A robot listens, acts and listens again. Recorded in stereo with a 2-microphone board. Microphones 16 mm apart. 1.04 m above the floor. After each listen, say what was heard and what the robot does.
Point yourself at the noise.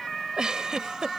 The giggle: about 65° right or 115° right. Turn 65° right.
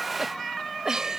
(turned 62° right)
So it is at 50° right. Turn 50° right.
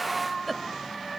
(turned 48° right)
Found it: a giggle, straight ahead.